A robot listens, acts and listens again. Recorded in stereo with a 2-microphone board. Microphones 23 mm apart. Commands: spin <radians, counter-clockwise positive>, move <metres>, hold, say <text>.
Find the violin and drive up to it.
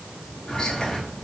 hold
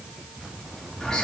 hold
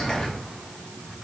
say I can't make out a violin to turn to.